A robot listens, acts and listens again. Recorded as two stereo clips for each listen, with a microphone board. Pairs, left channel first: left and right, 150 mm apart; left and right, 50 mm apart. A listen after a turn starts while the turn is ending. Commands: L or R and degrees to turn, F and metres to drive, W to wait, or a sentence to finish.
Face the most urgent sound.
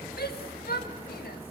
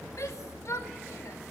L75
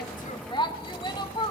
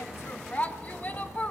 L30
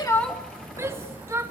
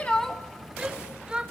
R15
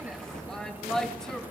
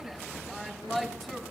Facing the shout.